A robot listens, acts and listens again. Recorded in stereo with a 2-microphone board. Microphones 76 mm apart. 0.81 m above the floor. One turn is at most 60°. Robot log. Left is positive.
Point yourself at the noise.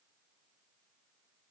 cmd idle
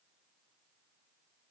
cmd idle
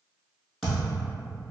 cmd yaw +30
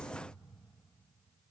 cmd idle
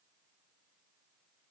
end: I heard a thud, but can't make it out now. It was about 30° right or 150° left.